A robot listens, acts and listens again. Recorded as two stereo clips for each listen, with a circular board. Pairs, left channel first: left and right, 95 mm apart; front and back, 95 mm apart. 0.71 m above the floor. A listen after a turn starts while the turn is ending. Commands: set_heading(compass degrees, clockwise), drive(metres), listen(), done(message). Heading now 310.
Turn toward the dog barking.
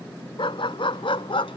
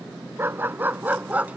set_heading(205)
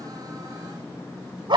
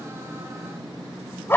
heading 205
set_heading(270)
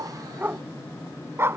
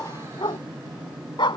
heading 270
set_heading(300)
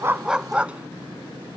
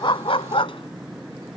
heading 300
set_heading(310)
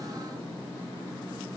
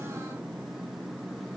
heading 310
listen()
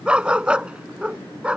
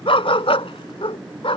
set_heading(320)
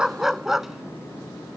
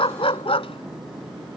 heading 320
done("Found it: a dog barking, straight ahead.")